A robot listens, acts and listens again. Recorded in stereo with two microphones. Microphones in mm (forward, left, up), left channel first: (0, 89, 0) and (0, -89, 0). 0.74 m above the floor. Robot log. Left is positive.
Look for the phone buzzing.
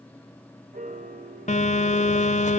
note: The phone buzzing: about 40° left or 140° left.
cmd yaw +40
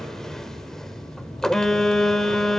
end: Found it: a phone buzzing, straight ahead.